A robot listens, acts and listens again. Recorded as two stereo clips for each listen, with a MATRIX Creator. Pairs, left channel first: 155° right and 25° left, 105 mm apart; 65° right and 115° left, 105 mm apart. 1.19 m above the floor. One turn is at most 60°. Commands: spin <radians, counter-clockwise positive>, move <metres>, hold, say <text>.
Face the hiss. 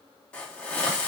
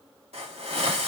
spin 1.05
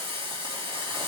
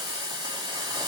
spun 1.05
spin 1.05
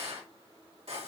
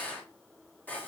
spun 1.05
say Found it: a hiss, straight ahead, 2 to 4 m away.